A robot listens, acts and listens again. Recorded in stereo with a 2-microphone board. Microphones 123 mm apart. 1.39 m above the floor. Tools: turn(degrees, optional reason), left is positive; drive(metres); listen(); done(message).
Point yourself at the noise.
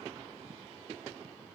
listen()
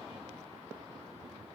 listen()
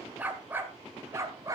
turn(degrees=-30, reason="The dog barking: about 30° right or 150° right.")
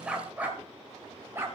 turn(degrees=-20, reason="The dog barking: about 20° right or 160° right.")
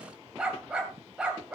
done("Facing the dog barking, 2 to 4 m away.")